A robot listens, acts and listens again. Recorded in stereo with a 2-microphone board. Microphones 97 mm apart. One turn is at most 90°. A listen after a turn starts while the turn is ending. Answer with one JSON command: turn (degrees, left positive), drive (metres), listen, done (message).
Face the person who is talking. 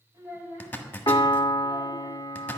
{"turn": -30}
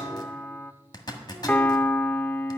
{"listen": true}
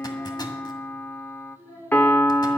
{"turn": 15}
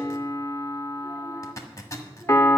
{"listen": true}
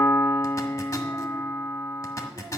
{"listen": true}
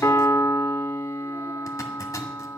{"done": "Facing where the child speaking came from. I can't hear it now."}